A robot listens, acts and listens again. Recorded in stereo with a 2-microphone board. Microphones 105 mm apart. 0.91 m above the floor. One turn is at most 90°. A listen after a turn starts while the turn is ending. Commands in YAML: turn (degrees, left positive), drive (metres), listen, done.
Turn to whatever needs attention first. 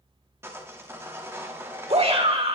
turn: -75
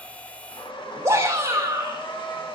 turn: -30
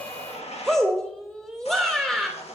done: "Facing the shout."